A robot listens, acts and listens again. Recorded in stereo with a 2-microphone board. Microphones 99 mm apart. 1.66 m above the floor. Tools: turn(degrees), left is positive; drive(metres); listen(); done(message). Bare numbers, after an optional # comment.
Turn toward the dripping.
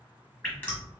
# The dripping: about 15° left or 165° left.
turn(15)
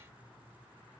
listen()
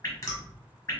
# So it is at 145° left.
turn(145)
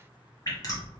# The dripping is now 40° left.
turn(40)
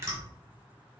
# The dripping is now 35° right.
turn(-35)
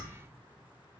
listen()
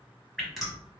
done("Facing the dripping, 1 to 2 m away.")